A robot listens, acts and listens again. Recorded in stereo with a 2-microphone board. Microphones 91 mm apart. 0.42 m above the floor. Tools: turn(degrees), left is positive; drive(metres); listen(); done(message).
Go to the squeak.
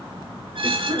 turn(degrees=-60)
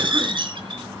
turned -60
turn(degrees=-60)
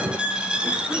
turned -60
turn(degrees=-10)
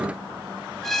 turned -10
drive(metres=1.0)
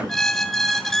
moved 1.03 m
drive(metres=1.0)
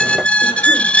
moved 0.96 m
turn(degrees=15)
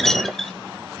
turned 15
drive(metres=1.0)
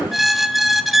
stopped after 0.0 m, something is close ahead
done("Arrived at the squeak, straight ahead.")